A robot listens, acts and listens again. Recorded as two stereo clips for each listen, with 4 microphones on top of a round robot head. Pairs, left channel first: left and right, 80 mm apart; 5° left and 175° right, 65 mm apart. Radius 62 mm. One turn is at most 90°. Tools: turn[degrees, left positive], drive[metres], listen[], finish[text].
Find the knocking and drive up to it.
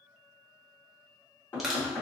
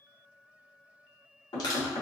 Thought: The knocking: 30° left.
Action: turn[30]
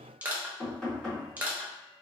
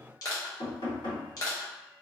Thought: The knocking is now 10° left.
Action: turn[10]
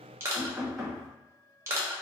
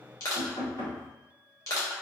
Action: drive[1.0]
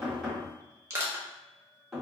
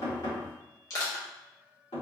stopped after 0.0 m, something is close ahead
Action: finish[Something is in my way. I am facing the knocking but have not reached it.]